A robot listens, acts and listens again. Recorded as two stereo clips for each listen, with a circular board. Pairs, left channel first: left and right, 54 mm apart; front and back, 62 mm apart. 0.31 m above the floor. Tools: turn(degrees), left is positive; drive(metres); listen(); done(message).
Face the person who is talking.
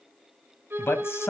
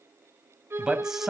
turn(degrees=95)
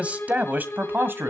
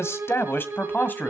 turn(degrees=-55)
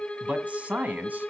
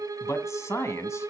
turn(degrees=-35)
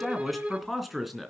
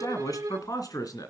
done("Found it: a man speaking, straight ahead, 2 to 4 m away.")